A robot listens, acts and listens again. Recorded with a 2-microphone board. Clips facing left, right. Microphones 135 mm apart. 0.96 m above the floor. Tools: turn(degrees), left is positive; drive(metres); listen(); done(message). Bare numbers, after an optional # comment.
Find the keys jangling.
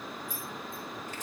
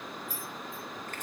# The keys jangling: about 65° left or 115° left.
turn(65)
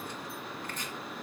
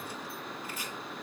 listen()
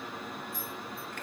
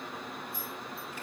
listen()
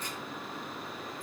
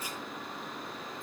done("I heard keys jangling, but can't make it out now. It was about straight ahead or 50° left.")